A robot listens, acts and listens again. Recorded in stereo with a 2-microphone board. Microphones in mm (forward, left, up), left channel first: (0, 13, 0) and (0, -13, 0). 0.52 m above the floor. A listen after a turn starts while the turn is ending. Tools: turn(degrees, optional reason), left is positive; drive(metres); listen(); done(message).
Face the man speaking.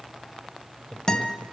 turn(degrees=65, reason="The man speaking: about 65° left or 115° left.")
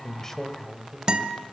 done("Facing the man speaking.")